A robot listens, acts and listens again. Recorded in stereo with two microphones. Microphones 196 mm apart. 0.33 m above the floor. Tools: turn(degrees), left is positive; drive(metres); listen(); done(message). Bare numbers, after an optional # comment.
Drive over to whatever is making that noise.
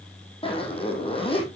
# The zipper: about 30° left or 150° left.
turn(30)
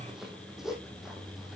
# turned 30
drive(1.0)
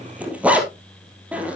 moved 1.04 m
drive(1.0)
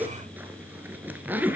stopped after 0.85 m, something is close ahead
# The zipper is now 10° right.
turn(-10)
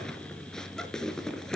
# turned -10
done("Arrived at the zipper, straight ahead.")